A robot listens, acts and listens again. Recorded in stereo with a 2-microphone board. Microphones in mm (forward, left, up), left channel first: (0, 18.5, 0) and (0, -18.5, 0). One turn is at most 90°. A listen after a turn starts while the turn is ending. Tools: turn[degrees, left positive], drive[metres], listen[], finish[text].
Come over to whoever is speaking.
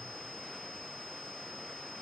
Action: listen[]
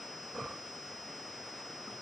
Action: listen[]
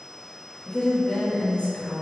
Thought: The woman speaking: about 35° left or 145° left.
Action: turn[35]
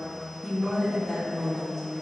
Action: drive[1.0]
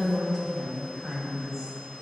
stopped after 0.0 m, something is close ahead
Action: finish[Blocked. The woman speaking is further on, straight ahead.]